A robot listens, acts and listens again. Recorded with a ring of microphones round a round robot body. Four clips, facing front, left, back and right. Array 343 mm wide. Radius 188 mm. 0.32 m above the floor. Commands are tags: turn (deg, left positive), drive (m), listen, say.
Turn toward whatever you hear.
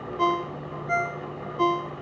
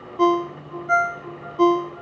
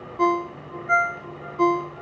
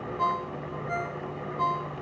<turn deg="105"/>
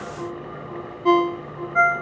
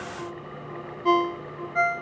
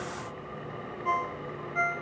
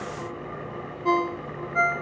<turn deg="10"/>
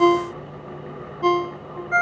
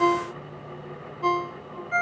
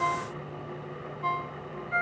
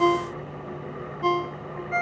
<say>Found it: a ringtone, straight ahead.</say>